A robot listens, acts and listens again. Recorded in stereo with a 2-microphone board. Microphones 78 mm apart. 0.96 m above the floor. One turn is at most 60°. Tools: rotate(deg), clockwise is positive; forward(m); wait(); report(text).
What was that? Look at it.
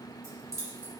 rotate(45)
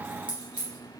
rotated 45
rotate(60)
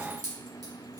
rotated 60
rotate(55)
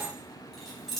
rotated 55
report("Facing the keys jangling, 1 to 2 m away.")